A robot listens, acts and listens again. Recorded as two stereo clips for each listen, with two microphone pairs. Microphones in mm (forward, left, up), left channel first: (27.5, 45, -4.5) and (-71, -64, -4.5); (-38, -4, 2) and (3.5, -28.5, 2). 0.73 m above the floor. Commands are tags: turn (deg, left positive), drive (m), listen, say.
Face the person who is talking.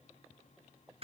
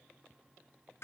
<listen/>
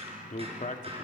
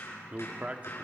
<turn deg="30"/>
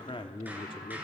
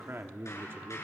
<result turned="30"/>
<say>Facing the man speaking, 1 to 2 m away.</say>